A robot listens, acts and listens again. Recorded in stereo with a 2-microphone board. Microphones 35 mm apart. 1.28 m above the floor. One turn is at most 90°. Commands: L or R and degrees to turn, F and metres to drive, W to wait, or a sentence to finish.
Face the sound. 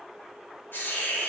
L90
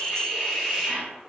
Facing the hiss.